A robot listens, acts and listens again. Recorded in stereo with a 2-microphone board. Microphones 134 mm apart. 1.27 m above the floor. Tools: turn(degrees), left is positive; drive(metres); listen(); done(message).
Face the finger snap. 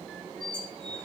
listen()
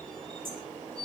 listen()
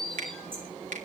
turn(degrees=-90)
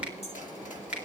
turn(degrees=-10)
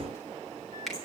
done("Facing the finger snap.")